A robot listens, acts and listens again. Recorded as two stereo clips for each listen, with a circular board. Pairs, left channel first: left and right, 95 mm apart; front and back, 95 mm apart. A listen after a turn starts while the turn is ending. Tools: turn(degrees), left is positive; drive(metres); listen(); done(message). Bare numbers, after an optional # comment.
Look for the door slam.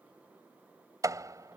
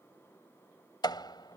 # The door slam: 40° right.
turn(-40)
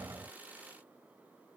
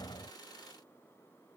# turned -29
# Nothing new. It was at 10° right.
turn(-10)
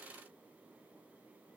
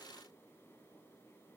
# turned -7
done("Facing where the door slam came from. I can't hear it now.")